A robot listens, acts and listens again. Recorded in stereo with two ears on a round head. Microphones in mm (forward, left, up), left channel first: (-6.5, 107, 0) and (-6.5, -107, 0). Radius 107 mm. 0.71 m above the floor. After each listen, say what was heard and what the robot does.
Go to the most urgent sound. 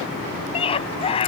The scream: about 25° left or 155° left. Turn 25° left.
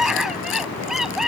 Drive 1.0 m forward.
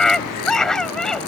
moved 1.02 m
Drive 1.0 m forward.
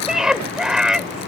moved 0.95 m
Drive 1.0 m forward.
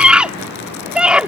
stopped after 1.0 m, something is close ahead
I am next to the scream.